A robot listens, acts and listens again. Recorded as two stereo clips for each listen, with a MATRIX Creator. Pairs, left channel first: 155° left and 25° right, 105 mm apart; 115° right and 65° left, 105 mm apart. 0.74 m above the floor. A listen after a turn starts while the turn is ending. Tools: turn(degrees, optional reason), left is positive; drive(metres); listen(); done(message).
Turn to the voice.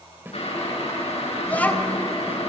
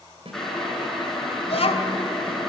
turn(degrees=-130, reason="The child speaking: 130° right.")
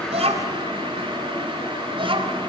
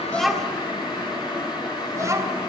done("Facing the child speaking, 2 to 4 m away.")